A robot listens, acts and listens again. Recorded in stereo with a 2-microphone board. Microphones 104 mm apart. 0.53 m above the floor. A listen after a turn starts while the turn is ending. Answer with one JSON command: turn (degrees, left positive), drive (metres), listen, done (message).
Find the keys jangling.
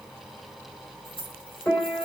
{"turn": 60}
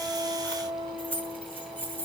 {"turn": 20}
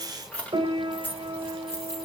{"turn": 25}
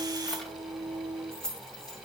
{"turn": 10}
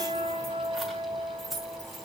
{"done": "Facing the keys jangling."}